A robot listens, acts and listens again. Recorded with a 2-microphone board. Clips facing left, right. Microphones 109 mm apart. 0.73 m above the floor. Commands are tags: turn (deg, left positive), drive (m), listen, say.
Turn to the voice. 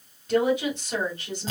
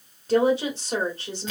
<turn deg="-35"/>
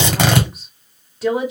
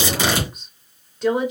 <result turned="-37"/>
<say>Found it: a woman speaking, straight ahead, 1 to 2 m away.</say>